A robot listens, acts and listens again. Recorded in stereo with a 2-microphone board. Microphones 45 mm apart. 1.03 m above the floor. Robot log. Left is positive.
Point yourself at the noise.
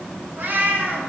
note: The cat meowing: about 45° right or 135° right.
cmd yaw -45
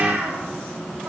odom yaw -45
note: So it is at 80° right.
cmd yaw -80
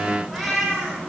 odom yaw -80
end: Found it: a cat meowing, straight ahead, over 4 m away.